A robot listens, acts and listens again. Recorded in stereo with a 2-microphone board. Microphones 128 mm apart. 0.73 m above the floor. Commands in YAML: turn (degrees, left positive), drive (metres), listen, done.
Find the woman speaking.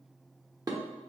listen: true
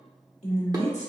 turn: 60
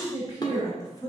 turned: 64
turn: 30
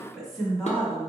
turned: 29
done: "Facing the woman speaking, 1 to 2 m away."